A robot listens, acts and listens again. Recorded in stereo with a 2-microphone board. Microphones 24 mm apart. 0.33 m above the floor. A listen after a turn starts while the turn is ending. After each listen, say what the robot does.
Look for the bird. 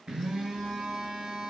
Keep listening.
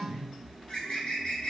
Turn 50° left.
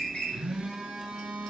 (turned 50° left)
Keep listening.
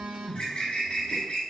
Turn 75° left.
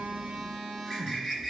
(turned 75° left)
Facing the bird, 1 to 2 m away.